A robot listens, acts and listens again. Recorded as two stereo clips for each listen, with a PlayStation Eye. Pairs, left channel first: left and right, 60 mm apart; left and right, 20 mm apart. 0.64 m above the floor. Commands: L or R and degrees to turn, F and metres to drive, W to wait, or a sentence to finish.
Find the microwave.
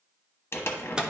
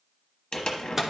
R30
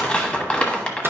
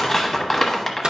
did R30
W
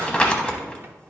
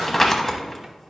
W
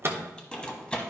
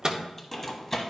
R135
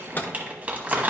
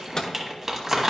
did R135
L35
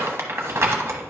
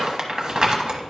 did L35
W
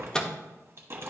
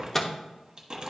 L10
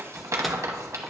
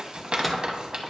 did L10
W
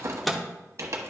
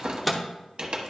Found it: a microwave, straight ahead, under 1 m away.